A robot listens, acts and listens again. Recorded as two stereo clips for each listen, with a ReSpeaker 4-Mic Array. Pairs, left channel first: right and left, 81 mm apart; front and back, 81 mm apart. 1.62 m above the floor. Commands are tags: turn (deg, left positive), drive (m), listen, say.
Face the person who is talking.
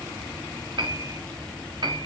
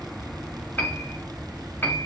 <listen/>
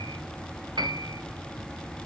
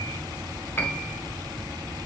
<listen/>
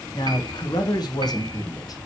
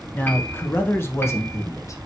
<turn deg="-50"/>
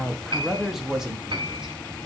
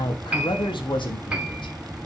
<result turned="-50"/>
<say>Facing the man speaking, 1 to 2 m away.</say>